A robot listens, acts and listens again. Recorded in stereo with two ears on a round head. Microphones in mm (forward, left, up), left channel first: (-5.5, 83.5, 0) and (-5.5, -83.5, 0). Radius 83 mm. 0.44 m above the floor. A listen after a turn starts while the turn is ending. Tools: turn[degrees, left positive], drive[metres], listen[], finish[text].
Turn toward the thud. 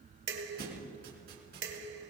Thought: The thud: about 55° right or 125° right.
Action: turn[-55]
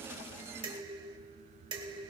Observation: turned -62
Action: listen[]
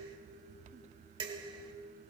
Action: finish[I heard a thud, but can't make it out now. It was about 5° left or 60° right.]